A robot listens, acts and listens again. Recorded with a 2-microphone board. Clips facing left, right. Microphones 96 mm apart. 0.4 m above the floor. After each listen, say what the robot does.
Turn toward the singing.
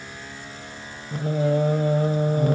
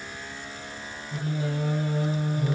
Turn 50° left.
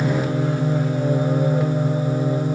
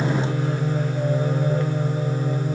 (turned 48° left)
Turn 15° left.
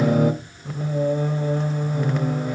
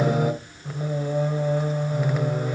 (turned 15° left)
Found it: singing, straight ahead.